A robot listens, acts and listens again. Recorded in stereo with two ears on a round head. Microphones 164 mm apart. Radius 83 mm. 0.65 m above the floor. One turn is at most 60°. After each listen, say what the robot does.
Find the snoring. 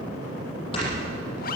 Turn 30° left.
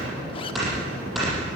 Found it: snoring, straight ahead.